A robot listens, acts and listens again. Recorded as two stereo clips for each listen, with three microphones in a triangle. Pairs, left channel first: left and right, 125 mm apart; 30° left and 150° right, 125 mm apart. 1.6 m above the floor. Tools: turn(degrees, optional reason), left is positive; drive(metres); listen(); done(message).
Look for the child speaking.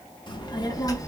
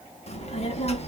turn(degrees=35, reason="The child speaking: 35° left.")
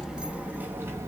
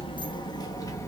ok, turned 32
turn(degrees=-30, reason="The child speaking is now 30° right.")
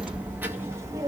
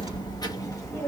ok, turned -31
turn(degrees=-35, reason="The child speaking is now 35° right.")
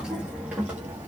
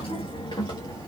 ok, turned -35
turn(degrees=-20, reason="The child speaking is now 20° right.")
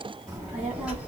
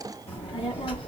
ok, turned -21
turn(degrees=-10, reason="The child speaking is now 10° right.")
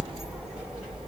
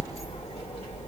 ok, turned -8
done("Facing the child speaking, 2 to 4 m away.")